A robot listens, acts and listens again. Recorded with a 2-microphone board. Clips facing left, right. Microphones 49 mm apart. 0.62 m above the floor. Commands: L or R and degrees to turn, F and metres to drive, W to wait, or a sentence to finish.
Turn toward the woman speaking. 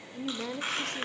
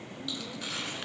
L65
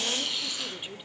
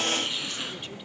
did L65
W
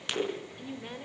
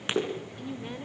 Facing the woman speaking, 1 to 2 m away.